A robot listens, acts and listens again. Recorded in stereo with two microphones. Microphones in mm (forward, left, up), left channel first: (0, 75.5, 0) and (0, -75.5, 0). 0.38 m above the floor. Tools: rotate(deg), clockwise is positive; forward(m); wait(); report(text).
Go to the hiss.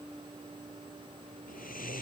wait()
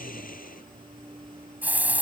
rotate(30)
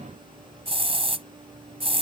rotate(135)
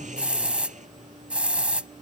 rotate(10)
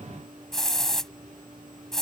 forward(1.0)
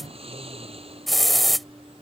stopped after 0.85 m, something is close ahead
report("Arrived at the hiss, straight ahead.")